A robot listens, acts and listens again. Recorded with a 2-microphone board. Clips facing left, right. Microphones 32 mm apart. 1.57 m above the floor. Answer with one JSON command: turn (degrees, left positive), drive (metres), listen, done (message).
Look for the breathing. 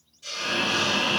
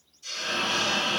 {"turn": 45}
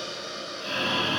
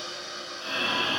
{"done": "Found it: breathing, straight ahead."}